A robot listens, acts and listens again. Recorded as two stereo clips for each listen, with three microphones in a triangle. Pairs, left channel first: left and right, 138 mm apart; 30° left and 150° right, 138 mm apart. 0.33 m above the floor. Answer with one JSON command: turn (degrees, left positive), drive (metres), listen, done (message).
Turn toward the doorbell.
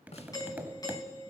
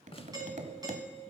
{"turn": 150}
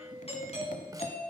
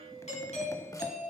{"turn": 55}
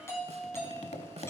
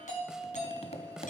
{"turn": 20}
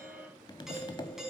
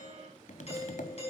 {"done": "Facing the doorbell, over 4 m away."}